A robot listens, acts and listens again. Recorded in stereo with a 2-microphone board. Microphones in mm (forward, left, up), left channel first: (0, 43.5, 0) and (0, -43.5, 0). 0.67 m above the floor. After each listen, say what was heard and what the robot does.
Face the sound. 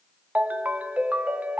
The ringtone: about 15° right or 165° right. Turn 15° right.
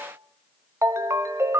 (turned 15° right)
So it is at 145° right. Turn 145° right.
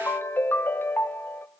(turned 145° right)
The ringtone is now 25° left. Turn 25° left.
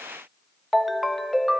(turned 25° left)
Facing the ringtone.